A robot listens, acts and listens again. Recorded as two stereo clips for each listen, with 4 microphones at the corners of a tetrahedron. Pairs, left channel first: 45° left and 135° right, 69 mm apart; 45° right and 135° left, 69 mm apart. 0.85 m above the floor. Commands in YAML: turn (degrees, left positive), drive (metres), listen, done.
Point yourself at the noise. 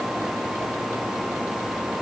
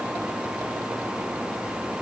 listen: true
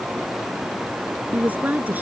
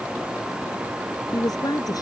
turn: -70
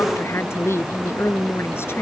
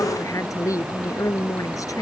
turn: -10
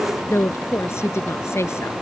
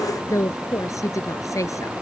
done: "Facing the woman speaking."